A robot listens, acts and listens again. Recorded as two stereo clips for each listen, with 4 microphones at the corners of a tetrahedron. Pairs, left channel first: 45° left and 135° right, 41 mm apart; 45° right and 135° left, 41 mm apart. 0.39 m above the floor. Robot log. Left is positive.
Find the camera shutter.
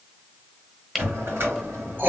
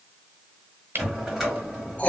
note: The camera shutter: 145° left.
cmd yaw +145
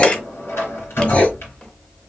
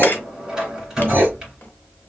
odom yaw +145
cmd idle
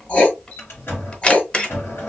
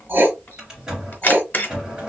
note: The camera shutter is now 15° right.
cmd yaw -15
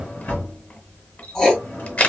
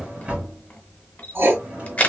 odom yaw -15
end: Facing the camera shutter, 1 to 2 m away.